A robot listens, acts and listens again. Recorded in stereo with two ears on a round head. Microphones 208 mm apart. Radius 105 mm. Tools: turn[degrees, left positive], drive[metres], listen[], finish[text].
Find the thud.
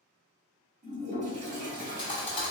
Thought: The thud: about 20° left or 160° left.
Action: turn[20]
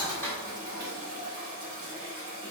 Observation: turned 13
Thought: So it is at 10° left.
Action: turn[10]
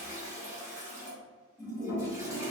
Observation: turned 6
Action: finish[I heard a thud from this way, but can't make it out now.]